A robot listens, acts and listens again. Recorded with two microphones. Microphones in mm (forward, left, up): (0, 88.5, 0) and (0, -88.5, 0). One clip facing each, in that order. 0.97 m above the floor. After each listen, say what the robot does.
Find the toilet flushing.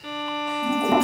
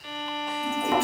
Turn 40° left.
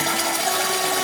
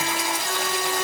Turn 100° left.
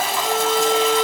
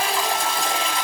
Facing the toilet flushing.